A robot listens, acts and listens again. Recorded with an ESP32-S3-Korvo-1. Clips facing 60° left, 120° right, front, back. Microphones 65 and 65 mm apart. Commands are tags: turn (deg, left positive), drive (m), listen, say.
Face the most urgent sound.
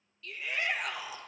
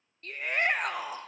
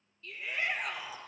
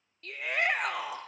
<turn deg="-160"/>
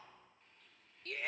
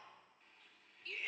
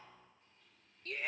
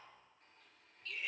<turn deg="35"/>
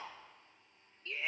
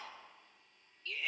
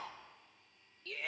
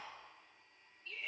<say>Facing the shout.</say>